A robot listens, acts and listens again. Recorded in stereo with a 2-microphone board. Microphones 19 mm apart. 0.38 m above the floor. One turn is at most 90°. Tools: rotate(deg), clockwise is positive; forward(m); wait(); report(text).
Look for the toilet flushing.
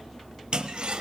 rotate(55)
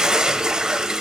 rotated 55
rotate(45)
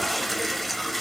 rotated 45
report("Facing the toilet flushing.")